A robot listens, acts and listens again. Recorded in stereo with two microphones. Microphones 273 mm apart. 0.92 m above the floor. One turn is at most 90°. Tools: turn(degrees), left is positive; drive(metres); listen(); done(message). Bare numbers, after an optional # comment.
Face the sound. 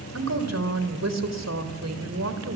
turn(-90)
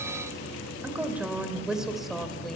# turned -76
done("Found it: a woman speaking, straight ahead.")